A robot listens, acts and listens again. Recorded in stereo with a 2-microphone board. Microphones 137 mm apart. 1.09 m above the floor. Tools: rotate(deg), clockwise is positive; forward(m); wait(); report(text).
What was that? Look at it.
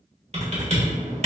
rotate(50)
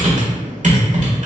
rotate(75)
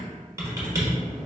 rotate(25)
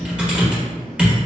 rotate(10)
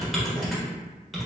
report("Found it: typing on a keyboard, straight ahead, 1 to 2 m away.")